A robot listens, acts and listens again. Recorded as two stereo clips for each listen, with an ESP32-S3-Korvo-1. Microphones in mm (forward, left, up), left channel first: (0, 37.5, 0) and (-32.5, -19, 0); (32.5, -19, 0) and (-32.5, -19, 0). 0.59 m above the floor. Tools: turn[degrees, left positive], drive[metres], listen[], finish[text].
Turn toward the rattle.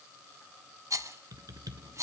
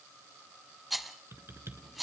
Thought: The rattle: 90° right.
Action: turn[-90]
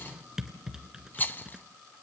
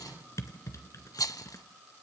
Action: finish[Facing the rattle, under 1 m away.]